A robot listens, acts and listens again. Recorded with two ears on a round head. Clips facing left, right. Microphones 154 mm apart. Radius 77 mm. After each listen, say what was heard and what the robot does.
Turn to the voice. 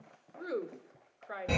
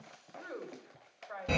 The woman speaking: about 70° left or 110° left. Turn 70° left.
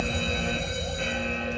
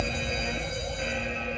Keep listening.
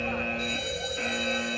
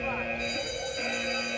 Keep listening.
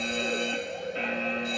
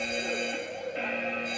I heard a woman speaking, but can't make it out now. It was about straight ahead or 40° left.